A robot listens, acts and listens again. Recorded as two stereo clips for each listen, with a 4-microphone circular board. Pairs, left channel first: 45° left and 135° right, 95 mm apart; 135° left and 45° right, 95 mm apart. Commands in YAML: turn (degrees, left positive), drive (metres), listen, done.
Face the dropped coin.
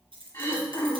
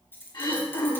turn: -160
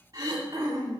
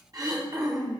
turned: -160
done: "I heard a dropped coin from this way, but can't make it out now."